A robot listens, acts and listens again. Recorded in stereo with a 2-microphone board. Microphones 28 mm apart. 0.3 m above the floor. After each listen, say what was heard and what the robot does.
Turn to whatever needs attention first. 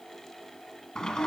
Keep listening.
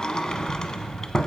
Keep listening.
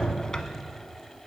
I can't make out anything urgent to turn to.